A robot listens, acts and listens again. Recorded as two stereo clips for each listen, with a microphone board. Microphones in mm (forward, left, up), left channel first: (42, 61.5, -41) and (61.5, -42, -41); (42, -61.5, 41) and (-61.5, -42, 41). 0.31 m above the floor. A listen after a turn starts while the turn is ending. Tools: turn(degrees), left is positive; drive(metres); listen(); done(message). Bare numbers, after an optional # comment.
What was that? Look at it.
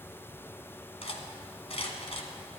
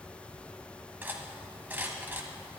# The cutlery clinking: 100° left.
turn(100)
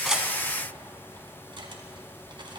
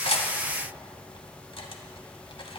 listen()
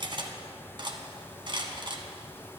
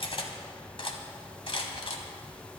# The cutlery clinking is now 45° right.
turn(-45)
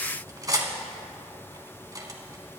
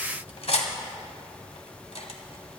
# The cutlery clinking is now 25° right.
turn(-25)
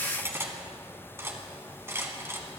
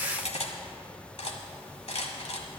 # The cutlery clinking is now 15° right.
turn(-15)
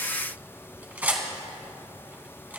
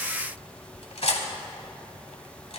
done("Facing the cutlery clinking, 1 to 2 m away.")